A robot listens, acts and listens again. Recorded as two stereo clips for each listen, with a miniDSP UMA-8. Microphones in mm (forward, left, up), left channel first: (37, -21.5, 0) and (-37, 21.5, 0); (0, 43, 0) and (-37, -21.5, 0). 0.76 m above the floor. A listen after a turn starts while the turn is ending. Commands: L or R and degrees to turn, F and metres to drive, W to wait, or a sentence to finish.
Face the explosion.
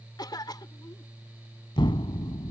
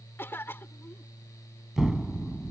R35
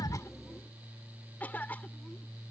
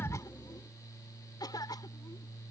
I heard an explosion from this way, but can't make it out now.